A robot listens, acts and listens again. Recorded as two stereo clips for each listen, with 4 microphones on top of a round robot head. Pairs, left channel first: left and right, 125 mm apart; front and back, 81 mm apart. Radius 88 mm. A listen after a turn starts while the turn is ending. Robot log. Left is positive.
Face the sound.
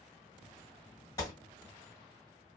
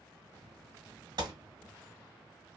note: The gunshot: 155° left.
cmd yaw +155
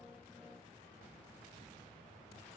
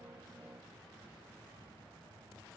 end: Facing where the gunshot came from. I can't hear it now.